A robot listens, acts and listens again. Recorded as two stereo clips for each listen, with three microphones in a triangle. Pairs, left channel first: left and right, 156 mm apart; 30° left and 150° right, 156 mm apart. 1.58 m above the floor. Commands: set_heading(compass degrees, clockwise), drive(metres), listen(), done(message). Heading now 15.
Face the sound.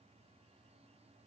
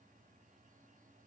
listen()
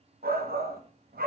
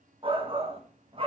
set_heading(110)
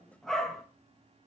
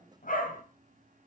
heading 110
done("Found it: a shout, straight ahead, 1 to 2 m away.")